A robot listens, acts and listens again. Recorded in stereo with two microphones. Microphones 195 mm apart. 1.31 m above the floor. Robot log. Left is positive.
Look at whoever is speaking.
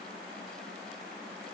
cmd idle
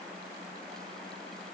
cmd idle
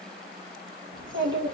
cmd yaw -90
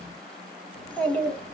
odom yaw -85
note: So it is at 10° left.
cmd yaw +10
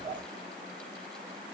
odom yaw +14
end: Facing the child speaking.